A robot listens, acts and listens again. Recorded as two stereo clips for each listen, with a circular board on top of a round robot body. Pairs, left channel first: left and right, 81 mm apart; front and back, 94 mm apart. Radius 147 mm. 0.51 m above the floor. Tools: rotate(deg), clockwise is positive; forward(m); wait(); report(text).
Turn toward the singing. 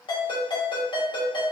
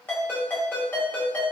wait()
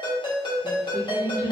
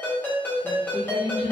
rotate(30)
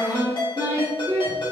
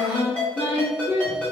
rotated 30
rotate(25)
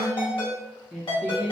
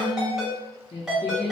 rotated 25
report("Found it: singing, straight ahead, 1 to 2 m away.")